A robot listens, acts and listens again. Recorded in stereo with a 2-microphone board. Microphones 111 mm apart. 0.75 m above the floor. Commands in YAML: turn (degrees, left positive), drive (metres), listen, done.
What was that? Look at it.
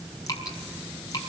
turn: 35
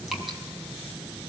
listen: true
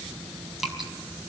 done: "Found it: dripping, straight ahead."